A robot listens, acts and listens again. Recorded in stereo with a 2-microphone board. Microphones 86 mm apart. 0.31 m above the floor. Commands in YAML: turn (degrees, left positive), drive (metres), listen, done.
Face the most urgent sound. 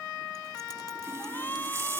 turn: 25
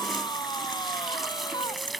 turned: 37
turn: 120
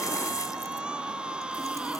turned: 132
turn: -10
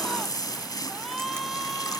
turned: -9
done: "Found it: a shout, straight ahead."